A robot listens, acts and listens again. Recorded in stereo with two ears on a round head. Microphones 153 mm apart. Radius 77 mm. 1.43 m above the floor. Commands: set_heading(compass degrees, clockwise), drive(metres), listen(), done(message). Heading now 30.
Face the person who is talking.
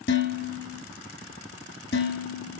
listen()
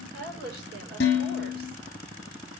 set_heading(100)
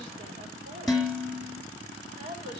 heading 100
set_heading(140)
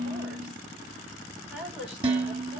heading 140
done("Facing the woman speaking.")